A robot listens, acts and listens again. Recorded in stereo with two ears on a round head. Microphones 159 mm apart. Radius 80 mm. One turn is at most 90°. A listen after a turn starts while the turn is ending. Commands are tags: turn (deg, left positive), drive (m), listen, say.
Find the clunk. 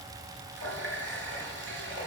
<listen/>
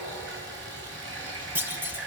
<turn deg="-30"/>
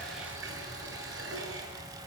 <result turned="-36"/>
<listen/>
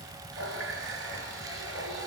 <say>I heard a clunk, but can't make it out now. It was about 25° left or 135° right.</say>